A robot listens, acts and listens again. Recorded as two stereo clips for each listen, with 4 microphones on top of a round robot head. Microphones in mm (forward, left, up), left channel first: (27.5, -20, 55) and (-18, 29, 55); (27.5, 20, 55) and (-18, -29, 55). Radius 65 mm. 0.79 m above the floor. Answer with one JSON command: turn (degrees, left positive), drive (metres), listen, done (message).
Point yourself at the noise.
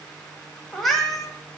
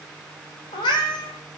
{"turn": 40}
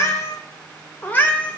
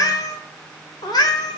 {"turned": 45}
{"turn": 25}
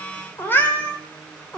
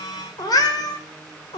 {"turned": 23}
{"turn": 30}
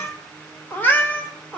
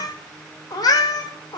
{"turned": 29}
{"turn": 25}
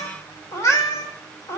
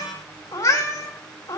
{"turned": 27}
{"done": "Facing the cat meowing, 1 to 2 m away."}